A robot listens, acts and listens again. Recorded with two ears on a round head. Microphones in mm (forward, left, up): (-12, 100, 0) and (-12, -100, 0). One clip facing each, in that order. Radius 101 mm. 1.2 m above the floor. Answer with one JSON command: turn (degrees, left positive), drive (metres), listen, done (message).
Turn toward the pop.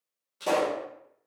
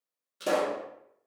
{"turn": -15}
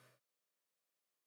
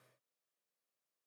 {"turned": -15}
{"listen": true}
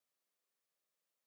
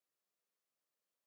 {"done": "I heard a pop, but can't make it out now. It was about straight ahead or 150° right."}